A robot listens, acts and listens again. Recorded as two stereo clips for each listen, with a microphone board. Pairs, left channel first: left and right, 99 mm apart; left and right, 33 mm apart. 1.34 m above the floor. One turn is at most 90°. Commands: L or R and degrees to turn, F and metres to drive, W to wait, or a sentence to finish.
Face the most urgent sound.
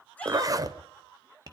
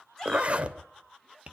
L30
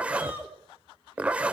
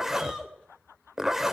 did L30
R15
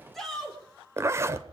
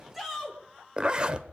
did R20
Facing the shout, 2 to 4 m away.